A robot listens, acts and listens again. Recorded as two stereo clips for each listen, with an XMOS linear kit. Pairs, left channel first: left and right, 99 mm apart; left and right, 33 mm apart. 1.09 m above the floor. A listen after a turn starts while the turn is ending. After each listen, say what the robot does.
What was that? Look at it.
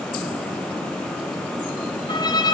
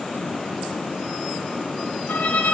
Turn 50° left.
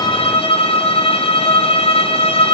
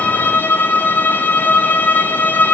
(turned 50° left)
Turn 75° left.
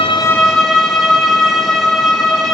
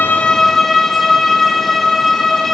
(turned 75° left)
Facing the violin.